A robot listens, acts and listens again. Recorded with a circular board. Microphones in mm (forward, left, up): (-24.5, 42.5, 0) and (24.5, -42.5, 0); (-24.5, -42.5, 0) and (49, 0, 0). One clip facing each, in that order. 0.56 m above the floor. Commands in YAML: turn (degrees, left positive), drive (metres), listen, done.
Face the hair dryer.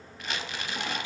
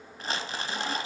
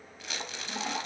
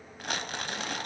listen: true
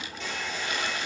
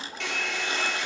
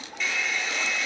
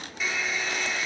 turn: -50
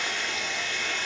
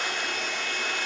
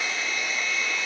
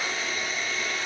turn: -25
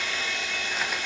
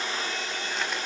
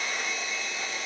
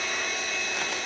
turn: -10
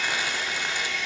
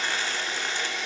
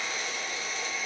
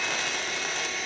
done: "Found it: a hair dryer, straight ahead, 2 to 4 m away."